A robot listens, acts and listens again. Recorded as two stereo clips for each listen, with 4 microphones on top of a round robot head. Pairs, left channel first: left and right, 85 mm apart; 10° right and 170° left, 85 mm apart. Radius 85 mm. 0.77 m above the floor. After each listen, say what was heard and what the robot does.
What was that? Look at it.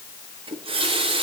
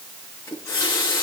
The running tap: 70° right. Turn 70° right.
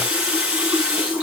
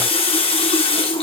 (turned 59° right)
The running tap is now 10° right. Turn 10° right.
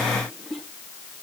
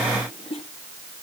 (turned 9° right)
Keep listening.
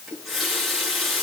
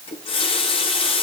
Found it: a running tap, straight ahead, over 4 m away.